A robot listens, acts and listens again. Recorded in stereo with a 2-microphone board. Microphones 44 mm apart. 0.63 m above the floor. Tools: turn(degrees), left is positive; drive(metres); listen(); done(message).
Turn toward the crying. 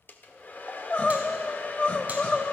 turn(degrees=35)
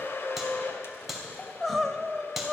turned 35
done("Facing the crying, 1 to 2 m away.")